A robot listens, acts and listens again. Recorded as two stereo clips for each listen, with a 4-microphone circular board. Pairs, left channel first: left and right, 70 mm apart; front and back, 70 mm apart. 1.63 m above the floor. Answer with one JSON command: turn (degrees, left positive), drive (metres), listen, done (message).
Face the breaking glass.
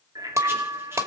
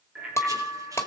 {"turn": -50}
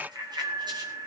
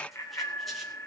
{"done": "Facing where the breaking glass came from. I can't hear it now."}